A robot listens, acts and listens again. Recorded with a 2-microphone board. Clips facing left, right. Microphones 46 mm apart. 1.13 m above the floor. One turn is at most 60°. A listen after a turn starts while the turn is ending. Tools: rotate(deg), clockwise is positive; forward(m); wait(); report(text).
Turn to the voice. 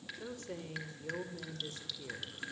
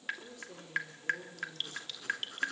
rotate(-50)
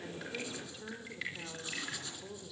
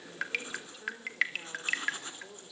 report("Found it: a woman speaking, straight ahead, over 4 m away.")